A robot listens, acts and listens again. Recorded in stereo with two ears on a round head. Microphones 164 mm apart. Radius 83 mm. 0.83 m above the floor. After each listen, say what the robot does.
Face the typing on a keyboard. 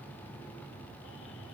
Keep listening.
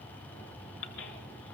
Keep listening.
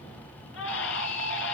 I can't make out typing on a keyboard to turn to.